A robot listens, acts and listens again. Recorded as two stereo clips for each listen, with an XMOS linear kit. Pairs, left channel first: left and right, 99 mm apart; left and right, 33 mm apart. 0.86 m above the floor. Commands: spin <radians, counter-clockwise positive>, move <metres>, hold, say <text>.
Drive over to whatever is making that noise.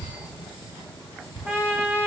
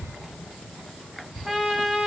spin -0.35
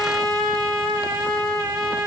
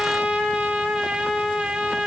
spin -2.44
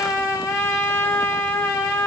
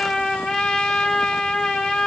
spin 0.52
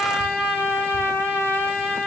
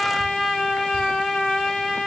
spin 0.35
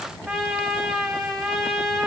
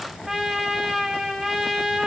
move 1.0
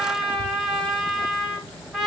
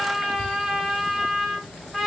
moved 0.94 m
move 1.0
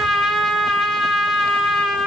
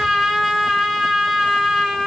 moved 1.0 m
move 1.0
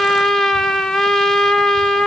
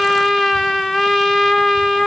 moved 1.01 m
move 1.0
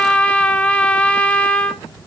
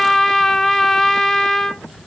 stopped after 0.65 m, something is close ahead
spin 0.17
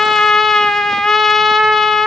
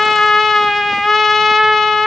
say Arrived at the trumpet, straight ahead.